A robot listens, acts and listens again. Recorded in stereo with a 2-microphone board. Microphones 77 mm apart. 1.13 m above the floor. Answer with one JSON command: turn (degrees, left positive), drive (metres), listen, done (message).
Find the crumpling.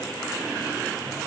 {"listen": true}
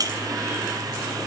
{"listen": true}
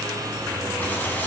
{"turn": 20}
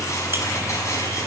{"turn": 140}
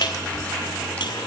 {"turn": 15}
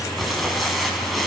{"done": "Found it: crumpling, straight ahead."}